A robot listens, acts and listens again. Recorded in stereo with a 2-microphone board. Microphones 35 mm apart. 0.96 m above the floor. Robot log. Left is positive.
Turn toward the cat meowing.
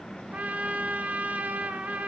cmd idle
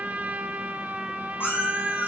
note: The cat meowing: about 70° left or 110° left.
cmd yaw +70
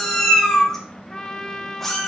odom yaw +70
end: Found it: a cat meowing, straight ahead, 2 to 4 m away.